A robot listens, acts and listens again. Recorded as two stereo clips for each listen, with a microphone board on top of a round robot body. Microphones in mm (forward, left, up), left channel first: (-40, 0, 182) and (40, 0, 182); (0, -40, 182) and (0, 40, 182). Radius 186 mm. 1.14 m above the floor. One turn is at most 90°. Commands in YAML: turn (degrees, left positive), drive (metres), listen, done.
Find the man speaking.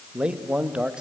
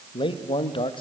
turn: -80
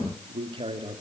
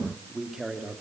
done: "Found it: a man speaking, straight ahead, 2 to 4 m away."